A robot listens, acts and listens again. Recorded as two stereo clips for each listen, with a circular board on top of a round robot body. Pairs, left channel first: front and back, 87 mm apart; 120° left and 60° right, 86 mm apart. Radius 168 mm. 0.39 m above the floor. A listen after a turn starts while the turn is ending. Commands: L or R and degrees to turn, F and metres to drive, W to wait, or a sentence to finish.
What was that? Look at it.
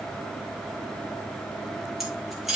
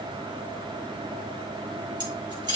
R90
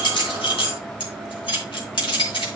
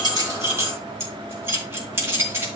Found it: keys jangling, straight ahead.